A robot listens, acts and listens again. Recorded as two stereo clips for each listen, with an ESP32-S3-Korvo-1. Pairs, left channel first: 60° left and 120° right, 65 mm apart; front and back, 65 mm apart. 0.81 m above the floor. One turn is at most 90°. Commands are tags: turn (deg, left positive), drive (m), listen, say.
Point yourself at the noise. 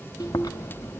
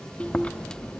<turn deg="70"/>
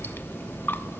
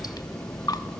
<say>Facing the chewing.</say>